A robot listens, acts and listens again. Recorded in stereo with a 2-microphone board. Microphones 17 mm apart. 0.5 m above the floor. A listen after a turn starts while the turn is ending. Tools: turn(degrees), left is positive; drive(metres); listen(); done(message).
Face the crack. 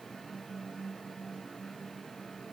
listen()
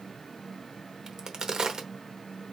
turn(degrees=-45)
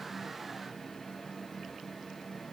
listen()
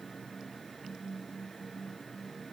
done("I heard a crack, but can't make it out now. It was about straight ahead or 90° right.")